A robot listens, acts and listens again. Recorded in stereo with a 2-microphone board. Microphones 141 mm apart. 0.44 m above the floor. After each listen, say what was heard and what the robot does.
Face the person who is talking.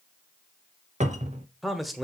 Turn 30° left.
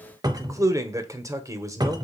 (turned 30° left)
So it is at 25° right. Turn 25° right.
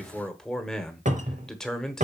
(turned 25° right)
Found it: a man speaking, straight ahead.